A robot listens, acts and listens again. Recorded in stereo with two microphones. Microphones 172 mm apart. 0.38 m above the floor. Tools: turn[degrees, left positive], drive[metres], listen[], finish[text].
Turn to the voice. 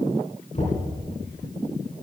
Action: listen[]
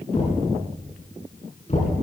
Action: listen[]
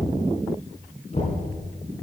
Action: finish[I can't make out anyone speaking, only knocking.]